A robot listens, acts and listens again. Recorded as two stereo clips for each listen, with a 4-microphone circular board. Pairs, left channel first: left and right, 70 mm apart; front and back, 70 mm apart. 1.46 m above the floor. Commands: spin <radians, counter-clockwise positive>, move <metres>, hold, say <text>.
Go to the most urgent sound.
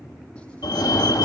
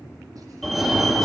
spin 1.48
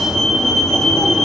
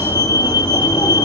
move 1.0
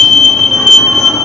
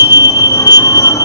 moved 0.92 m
move 1.0
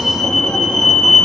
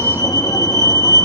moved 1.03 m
spin 0.17
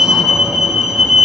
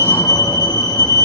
move 1.0
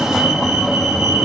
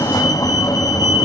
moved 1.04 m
move 1.0
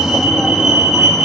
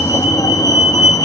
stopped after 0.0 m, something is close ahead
say I am next to the fire alarm.